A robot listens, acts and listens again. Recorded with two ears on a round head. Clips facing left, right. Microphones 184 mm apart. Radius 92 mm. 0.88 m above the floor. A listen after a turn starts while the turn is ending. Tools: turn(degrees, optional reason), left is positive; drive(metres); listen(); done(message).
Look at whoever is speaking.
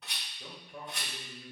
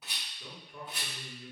turn(degrees=45, reason="The man speaking: about 45° left or 135° left.")
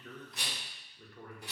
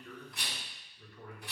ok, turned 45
turn(degrees=40, reason="The man speaking: about 40° left or 140° left.")
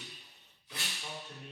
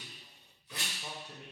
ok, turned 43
turn(degrees=-20, reason="So it is at 20° right.")
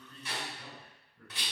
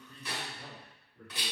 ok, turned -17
turn(degrees=-25, reason="The man speaking is now 25° right.")
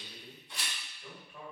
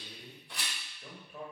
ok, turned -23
turn(degrees=-20, reason="The man speaking is now 20° right.")
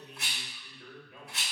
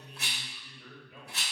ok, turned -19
done("Found it: a man speaking, straight ahead.")